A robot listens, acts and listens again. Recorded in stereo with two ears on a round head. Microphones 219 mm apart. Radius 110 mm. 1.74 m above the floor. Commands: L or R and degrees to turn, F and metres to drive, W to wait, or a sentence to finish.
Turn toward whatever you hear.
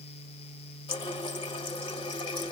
L20
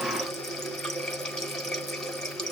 Facing the running tap.